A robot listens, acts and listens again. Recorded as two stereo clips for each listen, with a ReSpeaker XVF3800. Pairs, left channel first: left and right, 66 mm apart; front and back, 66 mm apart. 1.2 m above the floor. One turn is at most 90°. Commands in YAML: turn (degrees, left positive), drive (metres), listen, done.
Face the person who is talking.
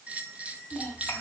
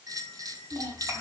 turn: 90
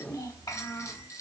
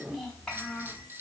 turn: 85
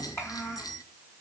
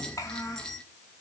turn: 40
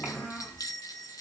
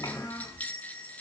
turn: 30
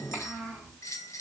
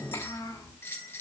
turn: 10
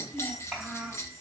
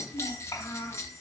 done: "Facing the child speaking."